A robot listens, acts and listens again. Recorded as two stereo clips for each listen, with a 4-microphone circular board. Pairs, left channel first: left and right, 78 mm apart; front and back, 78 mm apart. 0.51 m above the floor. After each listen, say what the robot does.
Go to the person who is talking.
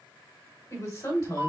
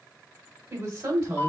Turn 140° left.
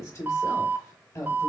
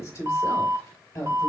Turn 50° left.
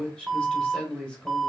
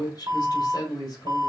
Turn 15° left.
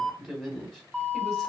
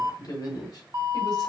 Drive 1.0 m forward.
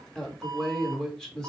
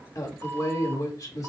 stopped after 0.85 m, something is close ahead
Turn 10° left.
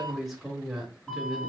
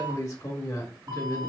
Arrived at the woman speaking, straight ahead.